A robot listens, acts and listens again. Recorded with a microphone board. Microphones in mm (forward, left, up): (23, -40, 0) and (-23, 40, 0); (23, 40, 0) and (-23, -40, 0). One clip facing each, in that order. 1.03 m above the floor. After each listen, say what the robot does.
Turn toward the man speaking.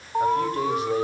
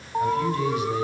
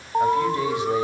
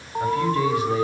Turn 10° right.
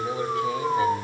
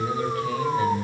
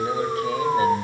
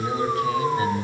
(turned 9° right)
Facing the man speaking.